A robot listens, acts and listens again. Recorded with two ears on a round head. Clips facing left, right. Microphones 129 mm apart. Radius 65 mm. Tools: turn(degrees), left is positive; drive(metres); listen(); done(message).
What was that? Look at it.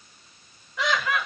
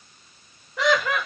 turn(degrees=-40)
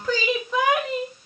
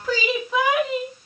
done("Facing the laughter.")